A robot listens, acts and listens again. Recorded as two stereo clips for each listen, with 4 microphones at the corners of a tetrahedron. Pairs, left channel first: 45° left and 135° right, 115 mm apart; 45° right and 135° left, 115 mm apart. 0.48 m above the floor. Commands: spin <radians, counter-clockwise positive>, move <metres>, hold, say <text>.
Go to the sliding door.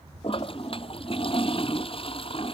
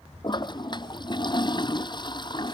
hold
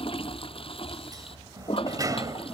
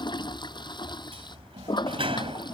spin 2.97
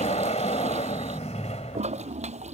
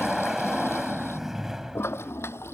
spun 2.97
spin 0.87
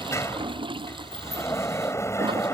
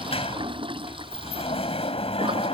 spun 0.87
spin -0.35
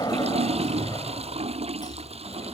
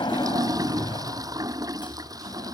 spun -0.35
move 1.0
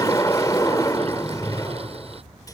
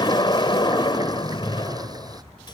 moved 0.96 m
spin -0.17
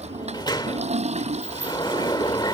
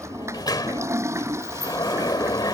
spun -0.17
move 1.0
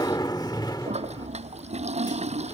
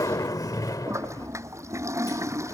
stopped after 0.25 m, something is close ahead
say I am next to the sliding door.